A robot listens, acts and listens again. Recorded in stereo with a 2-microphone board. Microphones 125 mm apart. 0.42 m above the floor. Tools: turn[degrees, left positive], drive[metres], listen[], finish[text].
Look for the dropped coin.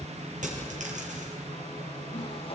Action: turn[-90]
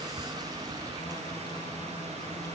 Action: finish[I heard a dropped coin from this way, but can't make it out now.]